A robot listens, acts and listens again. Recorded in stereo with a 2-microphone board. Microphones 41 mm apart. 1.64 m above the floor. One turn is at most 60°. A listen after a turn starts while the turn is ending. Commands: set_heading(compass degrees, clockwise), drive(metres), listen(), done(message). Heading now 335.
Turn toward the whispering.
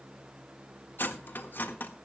listen()
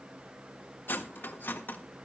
listen()
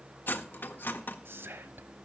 set_heading(35)
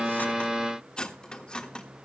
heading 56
listen()
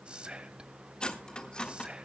set_heading(81)
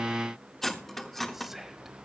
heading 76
done("Found it: whispering, straight ahead, 1 to 2 m away.")